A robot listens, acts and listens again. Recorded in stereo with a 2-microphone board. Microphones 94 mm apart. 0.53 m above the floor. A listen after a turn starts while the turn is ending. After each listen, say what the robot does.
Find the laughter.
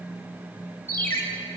Keep listening.
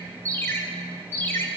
Keep listening.
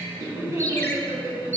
Turn 30° right.
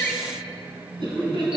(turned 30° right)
Turn 125° right.
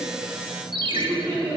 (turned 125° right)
Turn 15° right.
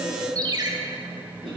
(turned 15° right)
Found it: laughter, straight ahead.